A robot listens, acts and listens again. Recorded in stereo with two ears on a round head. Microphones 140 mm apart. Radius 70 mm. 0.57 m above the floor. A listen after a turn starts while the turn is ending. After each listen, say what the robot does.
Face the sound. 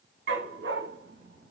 Turn 90° right.
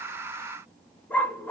Turn 10° left.
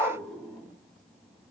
Keep listening.
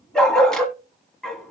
Facing the dog barking.